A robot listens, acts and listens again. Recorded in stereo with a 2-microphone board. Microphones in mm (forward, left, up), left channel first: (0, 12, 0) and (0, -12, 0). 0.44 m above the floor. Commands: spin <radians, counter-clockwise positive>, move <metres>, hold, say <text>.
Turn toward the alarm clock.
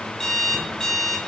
spin 0.35
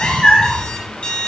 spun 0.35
spin 2.36
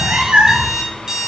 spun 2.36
spin -0.44
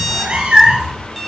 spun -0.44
say Found it: an alarm clock, straight ahead, 1 to 2 m away.